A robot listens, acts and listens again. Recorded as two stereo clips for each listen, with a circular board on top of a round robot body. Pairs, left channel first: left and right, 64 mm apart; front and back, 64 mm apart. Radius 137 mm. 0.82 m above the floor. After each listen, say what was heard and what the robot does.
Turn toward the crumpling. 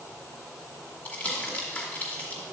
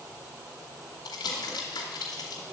The crumpling: 15° left. Turn 15° left.
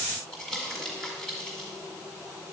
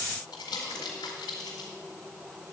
Found it: crumpling, straight ahead, 1 to 2 m away.